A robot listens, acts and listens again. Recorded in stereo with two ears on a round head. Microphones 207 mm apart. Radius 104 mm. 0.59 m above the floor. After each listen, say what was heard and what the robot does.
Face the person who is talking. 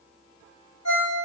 Keep listening.
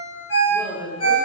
The woman speaking: about 25° left or 155° left. Turn 25° left.
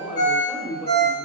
Facing the woman speaking, under 1 m away.